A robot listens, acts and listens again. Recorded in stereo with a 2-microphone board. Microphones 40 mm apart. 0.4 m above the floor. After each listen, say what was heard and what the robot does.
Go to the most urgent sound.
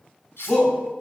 The shout: about 20° left or 160° left. Turn 20° left.
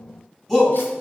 Drive 1.0 m forward.
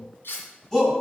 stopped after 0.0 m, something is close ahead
The shout is now 15° left. Turn 15° left.
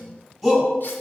Blocked. The shout is further on, straight ahead.